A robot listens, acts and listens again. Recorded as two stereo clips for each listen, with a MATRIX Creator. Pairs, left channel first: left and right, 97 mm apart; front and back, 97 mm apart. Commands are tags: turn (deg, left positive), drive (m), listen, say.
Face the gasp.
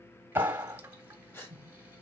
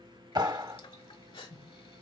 <turn deg="25"/>
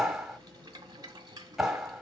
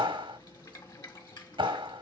<say>Facing where the gasp came from. I can't hear it now.</say>